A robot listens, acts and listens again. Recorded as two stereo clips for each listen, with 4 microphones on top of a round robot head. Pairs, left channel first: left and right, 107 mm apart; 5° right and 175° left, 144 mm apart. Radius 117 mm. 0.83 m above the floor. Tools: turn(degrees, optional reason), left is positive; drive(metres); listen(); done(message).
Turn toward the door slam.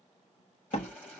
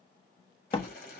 turn(degrees=55, reason="The door slam: 55° left.")
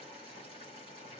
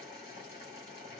done("Facing where the door slam came from. I can't hear it now.")